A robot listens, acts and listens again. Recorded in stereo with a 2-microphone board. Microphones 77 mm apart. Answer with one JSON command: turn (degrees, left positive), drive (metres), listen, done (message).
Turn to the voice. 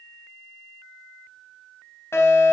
{"listen": true}
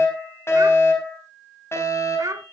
{"turn": -45}
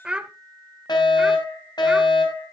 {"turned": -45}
{"turn": -15}
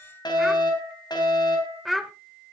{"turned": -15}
{"done": "Facing the child speaking."}